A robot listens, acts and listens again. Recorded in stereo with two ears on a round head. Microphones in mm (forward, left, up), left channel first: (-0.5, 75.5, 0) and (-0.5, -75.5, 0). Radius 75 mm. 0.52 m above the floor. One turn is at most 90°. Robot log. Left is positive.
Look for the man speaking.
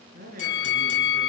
note: The man speaking: about 55° right or 125° right.
cmd yaw -55
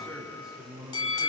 end: Facing the man speaking, over 4 m away.